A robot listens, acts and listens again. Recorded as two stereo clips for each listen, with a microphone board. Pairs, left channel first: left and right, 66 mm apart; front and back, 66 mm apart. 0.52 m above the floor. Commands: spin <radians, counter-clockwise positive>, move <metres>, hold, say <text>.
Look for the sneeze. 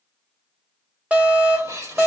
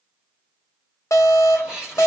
spin -1.83
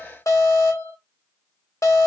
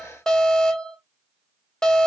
say Facing where the sneeze came from. I can't hear it now.